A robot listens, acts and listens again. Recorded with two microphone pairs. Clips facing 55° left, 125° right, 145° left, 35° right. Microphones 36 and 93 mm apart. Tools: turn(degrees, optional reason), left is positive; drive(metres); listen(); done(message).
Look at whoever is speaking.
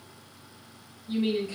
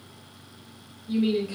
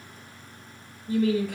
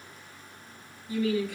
turn(degrees=160, reason="The woman speaking: 160° left.")
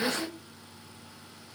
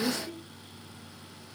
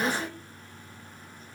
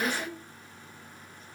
turn(degrees=35, reason="The woman speaking is now 35° left.")
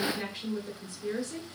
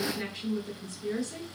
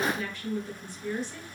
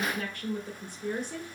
turn(degrees=-10, reason="The woman speaking is now 10° right.")
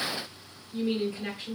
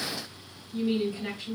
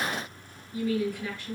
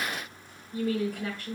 done("Found it: a woman speaking, straight ahead, 1 to 2 m away.")